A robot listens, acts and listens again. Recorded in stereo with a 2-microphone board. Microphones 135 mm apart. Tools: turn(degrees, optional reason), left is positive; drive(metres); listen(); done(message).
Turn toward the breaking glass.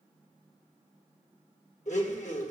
listen()
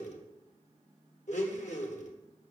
listen()
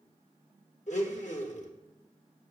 done("I can't make out breaking glass, only a blender.")